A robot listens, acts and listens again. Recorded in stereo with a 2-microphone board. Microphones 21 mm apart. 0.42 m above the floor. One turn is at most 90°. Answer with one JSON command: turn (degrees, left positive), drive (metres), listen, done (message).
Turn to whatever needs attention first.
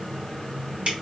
{"listen": true}
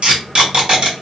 {"listen": true}
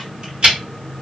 {"done": "I can't make out anything urgent to turn to."}